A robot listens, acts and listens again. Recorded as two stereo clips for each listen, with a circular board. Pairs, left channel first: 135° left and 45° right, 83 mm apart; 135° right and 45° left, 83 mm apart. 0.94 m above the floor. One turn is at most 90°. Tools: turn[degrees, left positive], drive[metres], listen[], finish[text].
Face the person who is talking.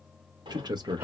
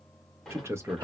Thought: The man speaking: 10° right.
Action: turn[-10]
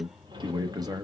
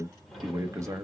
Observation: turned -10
Action: finish[Found it: a man speaking, straight ahead.]